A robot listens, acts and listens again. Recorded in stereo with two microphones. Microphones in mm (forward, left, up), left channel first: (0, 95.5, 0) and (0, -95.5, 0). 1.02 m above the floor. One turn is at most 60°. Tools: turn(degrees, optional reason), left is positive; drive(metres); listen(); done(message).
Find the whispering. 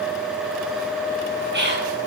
turn(degrees=-60, reason="The whispering: about 65° right or 115° right.")
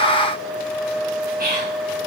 turn(degrees=-50, reason="So it is at 50° right.")
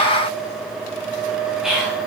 done("Found it: whispering, straight ahead.")